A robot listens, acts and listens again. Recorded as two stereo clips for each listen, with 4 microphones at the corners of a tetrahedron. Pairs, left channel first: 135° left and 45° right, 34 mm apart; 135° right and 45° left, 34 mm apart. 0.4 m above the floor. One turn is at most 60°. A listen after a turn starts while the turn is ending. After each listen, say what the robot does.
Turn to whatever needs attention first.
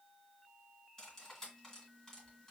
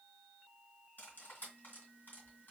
Keep listening.
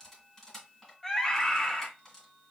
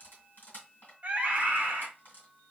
Turn 60° left.
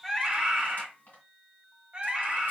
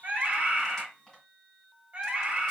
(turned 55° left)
Turn 10° left.
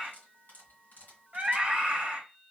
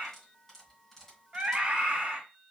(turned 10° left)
Facing the scream, 1 to 2 m away.